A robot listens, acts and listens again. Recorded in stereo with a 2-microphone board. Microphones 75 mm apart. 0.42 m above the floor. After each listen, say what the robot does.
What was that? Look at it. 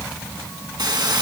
Turn 70° right.
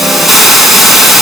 Found it: a hiss, straight ahead.